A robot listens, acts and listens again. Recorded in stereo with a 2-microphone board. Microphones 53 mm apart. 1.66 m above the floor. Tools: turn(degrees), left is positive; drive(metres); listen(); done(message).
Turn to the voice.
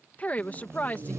turn(degrees=30)
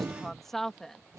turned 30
done("Found it: a woman speaking, straight ahead.")